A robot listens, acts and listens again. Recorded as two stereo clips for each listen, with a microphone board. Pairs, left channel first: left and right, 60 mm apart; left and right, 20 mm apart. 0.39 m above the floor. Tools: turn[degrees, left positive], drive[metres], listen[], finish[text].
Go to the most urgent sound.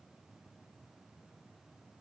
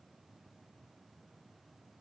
Action: listen[]
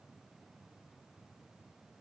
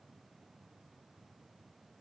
Action: listen[]
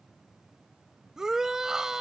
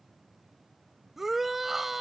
Action: turn[-30]
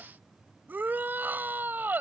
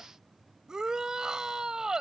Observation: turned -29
Thought: So it is at 140° right.
Action: turn[-140]
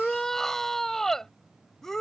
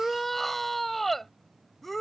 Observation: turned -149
Thought: The shout is now 10° left.
Action: turn[10]
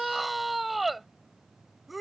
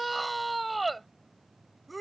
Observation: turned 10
Action: drive[1.0]
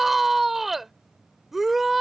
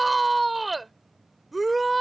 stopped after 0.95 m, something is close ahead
Action: finish[I am next to the shout.]